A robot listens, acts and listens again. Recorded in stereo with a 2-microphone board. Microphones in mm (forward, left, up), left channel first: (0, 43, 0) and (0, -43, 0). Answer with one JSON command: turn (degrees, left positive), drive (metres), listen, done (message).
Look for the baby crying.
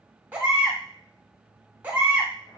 {"turn": -20}
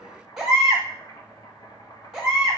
{"done": "Found it: a baby crying, straight ahead, 1 to 2 m away."}